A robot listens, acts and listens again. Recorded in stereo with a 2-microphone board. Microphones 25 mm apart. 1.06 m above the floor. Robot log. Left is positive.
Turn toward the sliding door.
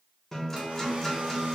cmd idle
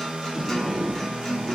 note: The sliding door: about 70° right or 110° right.
cmd yaw -70
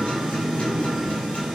end: Found it: a sliding door, straight ahead.